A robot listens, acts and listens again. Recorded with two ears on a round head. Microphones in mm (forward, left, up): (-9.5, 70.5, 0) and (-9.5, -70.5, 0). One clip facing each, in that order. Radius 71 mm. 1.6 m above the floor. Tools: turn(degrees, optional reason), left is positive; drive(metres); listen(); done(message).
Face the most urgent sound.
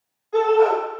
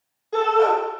turn(degrees=-40, reason="The shout: about 40° right or 140° right.")
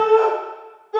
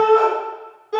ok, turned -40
turn(degrees=-95, reason="So it is at 95° right.")
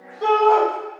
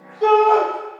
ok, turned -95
turn(degrees=-10, reason="The shout is now 10° right.")
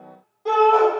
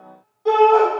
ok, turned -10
done("Found it: a shout, straight ahead, 2 to 4 m away.")